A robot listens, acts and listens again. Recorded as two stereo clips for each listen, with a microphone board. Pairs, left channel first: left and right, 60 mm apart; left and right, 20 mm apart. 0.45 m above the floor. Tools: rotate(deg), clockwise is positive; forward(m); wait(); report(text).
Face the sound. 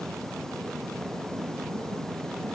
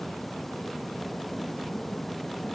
wait()
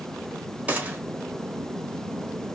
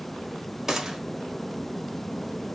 rotate(25)
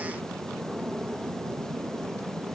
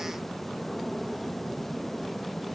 wait()
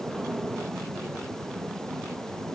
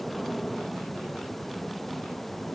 report("I heard a gunshot, but can't make it out now. It was about straight ahead or 130° right.")